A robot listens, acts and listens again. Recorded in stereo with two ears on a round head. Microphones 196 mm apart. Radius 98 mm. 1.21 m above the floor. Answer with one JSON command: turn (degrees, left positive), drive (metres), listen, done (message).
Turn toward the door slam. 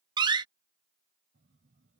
{"turn": -20}
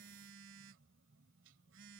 {"listen": true}
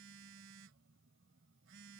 {"done": "I heard a door slam, but can't make it out now. It was about straight ahead or 140° right."}